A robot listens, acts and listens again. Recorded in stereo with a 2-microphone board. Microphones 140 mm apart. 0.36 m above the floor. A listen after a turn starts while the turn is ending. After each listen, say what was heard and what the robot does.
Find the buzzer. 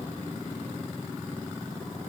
Keep listening.
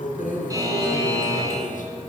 The buzzer: about 25° right or 155° right. Turn 25° right.
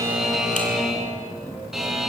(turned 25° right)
Found it: a buzzer, straight ahead, 2 to 4 m away.